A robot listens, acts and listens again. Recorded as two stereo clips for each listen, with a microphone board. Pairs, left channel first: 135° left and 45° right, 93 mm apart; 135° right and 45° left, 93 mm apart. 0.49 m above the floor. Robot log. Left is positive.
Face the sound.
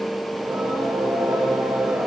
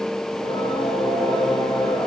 note: The singing: 115° right.
cmd yaw -115
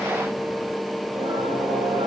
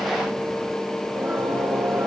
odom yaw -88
note: The singing is now 25° right.
cmd yaw -25
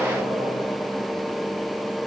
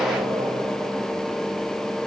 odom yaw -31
cmd idle
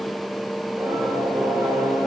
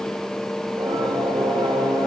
end: Facing the singing, over 4 m away.